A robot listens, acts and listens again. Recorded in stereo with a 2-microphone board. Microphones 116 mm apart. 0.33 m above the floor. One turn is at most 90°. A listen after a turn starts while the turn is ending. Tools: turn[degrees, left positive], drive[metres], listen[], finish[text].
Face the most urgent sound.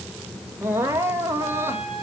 Thought: The crying: about 20° right or 160° right.
Action: turn[-20]
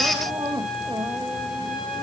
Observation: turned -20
Thought: So it is at 140° right.
Action: turn[-90]
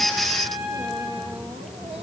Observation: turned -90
Thought: Nothing new. It was at 50° right.
Action: turn[-50]
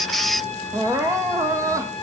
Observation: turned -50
Thought: The crying is now 25° right.
Action: turn[-25]
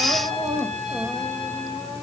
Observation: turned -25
Thought: The crying is now 20° right.
Action: turn[-20]
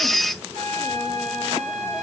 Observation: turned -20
Action: listen[]
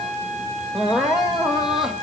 Action: finish[Facing the crying, 1 to 2 m away.]